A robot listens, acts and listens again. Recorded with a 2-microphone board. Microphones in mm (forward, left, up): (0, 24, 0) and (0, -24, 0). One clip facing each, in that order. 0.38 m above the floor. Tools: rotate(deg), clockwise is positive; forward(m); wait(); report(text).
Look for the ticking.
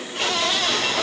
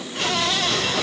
wait()
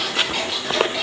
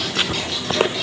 rotate(-20)
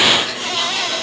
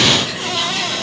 report("Facing the ticking, over 4 m away.")